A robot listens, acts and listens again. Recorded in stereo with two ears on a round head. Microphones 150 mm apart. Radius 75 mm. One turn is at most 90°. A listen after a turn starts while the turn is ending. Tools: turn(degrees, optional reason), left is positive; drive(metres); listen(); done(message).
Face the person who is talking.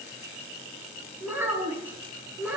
turn(degrees=-30)
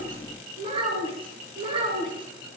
turn(degrees=-90, reason="So it is at 150° right.")
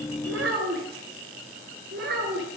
turn(degrees=-65, reason="The child speaking is now 65° right.")
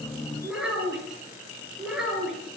done("Found it: a child speaking, straight ahead.")